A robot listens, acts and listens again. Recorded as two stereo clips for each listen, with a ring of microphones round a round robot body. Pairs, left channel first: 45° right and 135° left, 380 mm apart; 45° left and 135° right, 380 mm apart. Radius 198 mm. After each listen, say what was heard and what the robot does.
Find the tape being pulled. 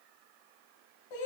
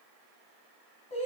Keep listening.
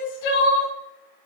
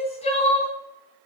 Keep listening.
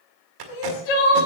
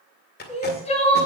The tape being pulled: 110° left. Turn 110° left.
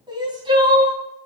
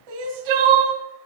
Keep listening.
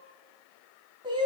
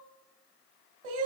Keep listening.
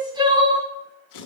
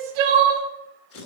The tape being pulled is now 10° right. Turn 10° right.
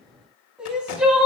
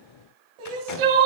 Keep listening.
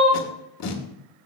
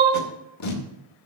Facing the tape being pulled, 2 to 4 m away.